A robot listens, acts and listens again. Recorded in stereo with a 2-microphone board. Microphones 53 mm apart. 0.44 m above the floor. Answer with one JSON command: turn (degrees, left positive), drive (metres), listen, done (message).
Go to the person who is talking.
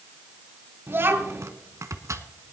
{"turn": -45}
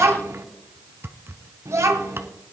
{"turn": -85}
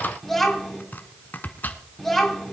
{"drive": 1.0}
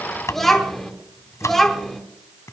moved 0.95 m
{"drive": 1.0}
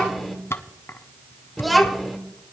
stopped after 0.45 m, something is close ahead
{"done": "I am next to the child speaking."}